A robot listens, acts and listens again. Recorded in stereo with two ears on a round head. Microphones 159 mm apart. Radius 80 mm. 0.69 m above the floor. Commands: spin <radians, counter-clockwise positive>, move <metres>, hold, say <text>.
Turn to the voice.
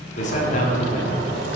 spin 0.79
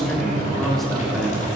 say Found it: a man speaking, straight ahead, 1 to 2 m away.